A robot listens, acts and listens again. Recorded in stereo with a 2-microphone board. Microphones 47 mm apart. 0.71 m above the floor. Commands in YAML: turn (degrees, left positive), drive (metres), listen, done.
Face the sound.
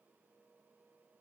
listen: true
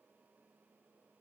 listen: true
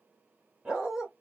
turn: -30
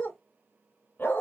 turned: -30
turn: 45
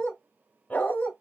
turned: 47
turn: 35
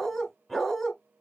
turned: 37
done: "Facing the dog barking, 1 to 2 m away."